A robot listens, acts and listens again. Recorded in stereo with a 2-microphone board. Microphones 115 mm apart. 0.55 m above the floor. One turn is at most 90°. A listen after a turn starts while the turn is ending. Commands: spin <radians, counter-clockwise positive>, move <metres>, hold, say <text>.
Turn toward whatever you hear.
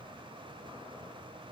hold
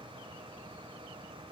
hold
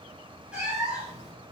spin -0.52
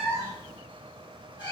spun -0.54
spin 0.70
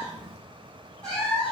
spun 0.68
spin 0.17
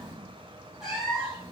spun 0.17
say Facing the cat meowing.